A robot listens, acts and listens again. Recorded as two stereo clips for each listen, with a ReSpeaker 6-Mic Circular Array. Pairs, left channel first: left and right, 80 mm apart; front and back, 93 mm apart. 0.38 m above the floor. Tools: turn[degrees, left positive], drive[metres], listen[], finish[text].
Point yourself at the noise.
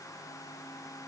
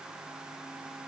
Action: listen[]
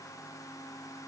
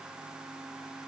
Action: listen[]
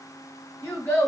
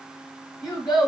Thought: The child speaking: 30° left.
Action: turn[30]
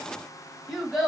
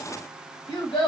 Action: finish[Facing the child speaking.]